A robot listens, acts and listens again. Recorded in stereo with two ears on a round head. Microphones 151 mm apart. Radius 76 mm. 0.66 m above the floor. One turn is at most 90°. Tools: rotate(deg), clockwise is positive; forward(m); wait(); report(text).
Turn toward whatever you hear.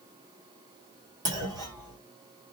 rotate(25)
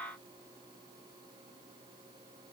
wait()
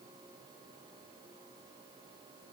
report("I heard a clunk, but can't make it out now. It was about straight ahead or 130° right.")